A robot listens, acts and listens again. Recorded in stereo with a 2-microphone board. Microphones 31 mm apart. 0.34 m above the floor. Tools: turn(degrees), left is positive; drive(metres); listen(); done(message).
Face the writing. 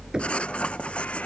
turn(degrees=40)
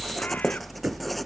done("Facing the writing.")